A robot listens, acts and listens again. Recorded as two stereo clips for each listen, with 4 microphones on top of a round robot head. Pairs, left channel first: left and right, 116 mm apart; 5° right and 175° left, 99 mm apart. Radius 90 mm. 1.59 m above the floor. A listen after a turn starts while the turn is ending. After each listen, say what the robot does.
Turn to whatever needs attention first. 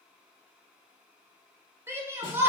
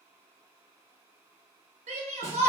Turn 160° right.
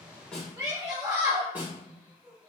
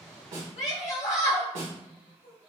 Turn 25° right.
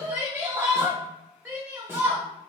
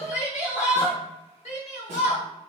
Turn 15° right.
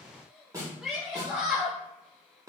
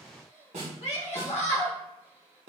Facing the shout.